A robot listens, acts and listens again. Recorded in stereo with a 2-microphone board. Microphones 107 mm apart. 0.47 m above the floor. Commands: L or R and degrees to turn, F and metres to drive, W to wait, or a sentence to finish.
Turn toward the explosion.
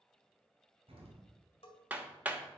R60
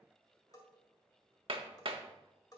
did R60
W
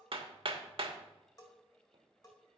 I heard an explosion, but can't make it out now. It was about straight ahead or 60° right.